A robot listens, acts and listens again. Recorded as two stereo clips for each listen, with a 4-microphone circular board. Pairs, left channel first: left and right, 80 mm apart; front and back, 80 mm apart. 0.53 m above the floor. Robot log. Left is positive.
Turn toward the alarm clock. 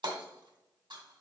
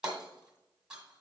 cmd idle
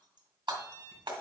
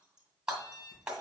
note: The alarm clock: 50° right.
cmd yaw -50
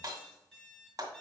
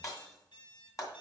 end: Facing the alarm clock.